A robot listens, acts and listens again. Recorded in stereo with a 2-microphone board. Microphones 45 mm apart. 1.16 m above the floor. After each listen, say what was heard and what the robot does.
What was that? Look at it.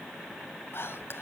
The whispering: about 60° left or 120° left. Turn 60° left.
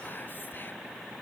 Keep listening.
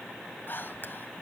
So it is at 55° left. Turn 55° left.
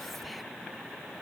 Keep listening.
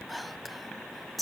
Facing the whispering.